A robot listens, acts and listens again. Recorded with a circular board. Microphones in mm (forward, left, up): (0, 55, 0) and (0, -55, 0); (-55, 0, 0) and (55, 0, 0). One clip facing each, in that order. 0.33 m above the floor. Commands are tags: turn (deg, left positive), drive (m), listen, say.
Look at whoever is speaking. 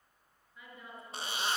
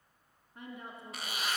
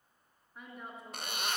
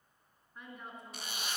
<turn deg="-95"/>
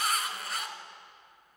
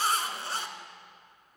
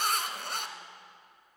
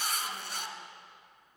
<listen/>
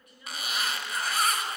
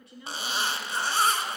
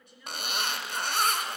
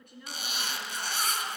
<turn deg="-35"/>
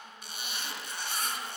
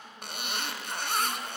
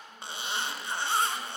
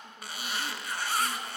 <listen/>
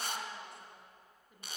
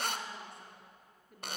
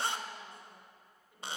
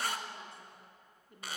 <say>Facing the woman speaking.</say>